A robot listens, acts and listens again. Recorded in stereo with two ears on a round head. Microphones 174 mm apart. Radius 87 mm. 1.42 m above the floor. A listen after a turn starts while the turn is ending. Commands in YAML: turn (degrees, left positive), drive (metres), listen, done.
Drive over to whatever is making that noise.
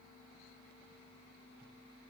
listen: true
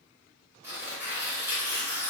turn: -30
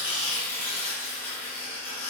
turn: 20
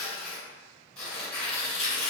turn: 10
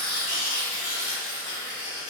drive: 1.0
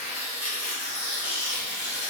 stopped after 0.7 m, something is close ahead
turn: -10
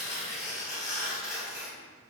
done: "I am next to the tearing paper."